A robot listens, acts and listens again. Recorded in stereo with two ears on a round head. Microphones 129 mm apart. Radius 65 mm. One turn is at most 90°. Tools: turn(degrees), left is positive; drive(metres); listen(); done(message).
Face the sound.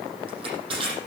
turn(degrees=-40)
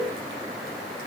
listen()
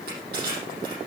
turn(degrees=-90)
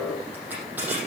turn(degrees=-15)
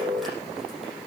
listen()
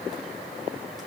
listen()
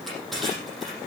done("Found it: crushing, straight ahead, over 4 m away.")